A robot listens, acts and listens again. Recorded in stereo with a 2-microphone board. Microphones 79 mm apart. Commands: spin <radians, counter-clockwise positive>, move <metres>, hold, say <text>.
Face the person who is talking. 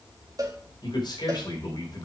spin 1.05
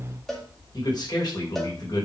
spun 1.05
spin 1.05
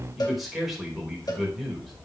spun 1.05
say Facing the man speaking.